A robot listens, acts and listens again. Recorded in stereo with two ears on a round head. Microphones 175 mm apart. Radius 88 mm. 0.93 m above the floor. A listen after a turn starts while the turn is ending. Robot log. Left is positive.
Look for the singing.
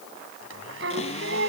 note: The singing: about 60° right or 120° right.
cmd yaw -60
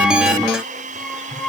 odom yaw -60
end: Facing the singing.